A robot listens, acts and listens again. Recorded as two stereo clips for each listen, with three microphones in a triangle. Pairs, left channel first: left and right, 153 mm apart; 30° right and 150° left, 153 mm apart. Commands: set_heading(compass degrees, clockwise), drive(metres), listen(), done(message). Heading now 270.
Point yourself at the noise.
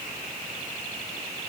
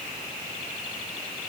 listen()
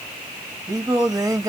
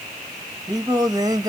set_heading(60)
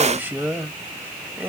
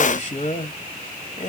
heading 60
set_heading(75)
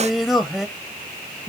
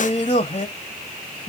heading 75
done("Facing the singing.")